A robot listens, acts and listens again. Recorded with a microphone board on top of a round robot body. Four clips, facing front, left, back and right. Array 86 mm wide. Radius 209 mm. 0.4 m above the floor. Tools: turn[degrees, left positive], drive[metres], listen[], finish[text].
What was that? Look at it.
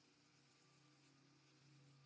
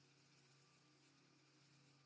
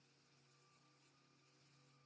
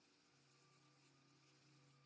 Action: listen[]
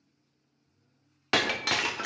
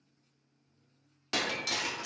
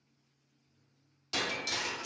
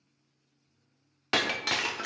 Thought: The breaking glass: 30° right.
Action: turn[-30]
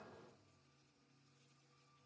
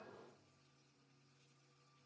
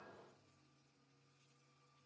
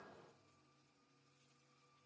Action: finish[Facing where the breaking glass came from. I can't hear it now.]